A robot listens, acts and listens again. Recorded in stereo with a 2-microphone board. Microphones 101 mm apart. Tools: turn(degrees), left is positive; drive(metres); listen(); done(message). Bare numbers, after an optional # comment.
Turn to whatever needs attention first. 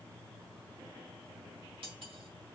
listen()
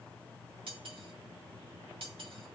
listen()
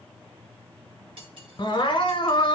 # The crying: about 55° left or 125° left.
turn(55)
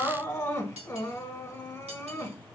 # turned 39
# So it is at 35° left.
turn(35)
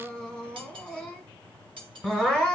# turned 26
# The crying is now 10° left.
turn(10)
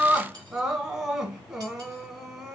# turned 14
done("Found it: crying, straight ahead.")